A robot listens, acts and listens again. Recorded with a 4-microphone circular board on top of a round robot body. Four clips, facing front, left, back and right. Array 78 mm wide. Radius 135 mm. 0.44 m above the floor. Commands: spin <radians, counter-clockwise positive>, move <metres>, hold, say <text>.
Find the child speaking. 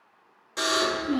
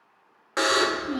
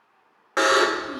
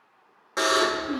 spin 0.79
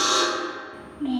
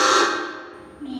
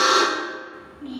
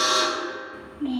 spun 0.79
say Found it: a child speaking, straight ahead.